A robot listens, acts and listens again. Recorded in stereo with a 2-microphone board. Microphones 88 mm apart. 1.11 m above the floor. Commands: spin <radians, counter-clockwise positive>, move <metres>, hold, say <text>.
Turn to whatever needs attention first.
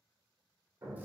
hold
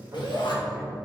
spin 1.05
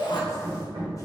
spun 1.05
spin 1.05
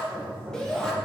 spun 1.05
say Found it: a shout, straight ahead.